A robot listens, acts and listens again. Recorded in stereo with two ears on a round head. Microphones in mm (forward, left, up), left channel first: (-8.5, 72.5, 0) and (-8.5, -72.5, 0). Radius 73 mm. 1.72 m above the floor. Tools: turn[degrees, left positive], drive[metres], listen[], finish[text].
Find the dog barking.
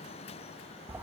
Action: listen[]
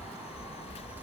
Action: listen[]
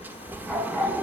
Action: turn[30]
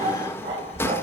Thought: So it is at 30° right.
Action: turn[-30]
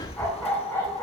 Thought: The dog barking is now 10° left.
Action: turn[10]
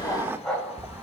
Action: finish[Found it: a dog barking, straight ahead, over 4 m away.]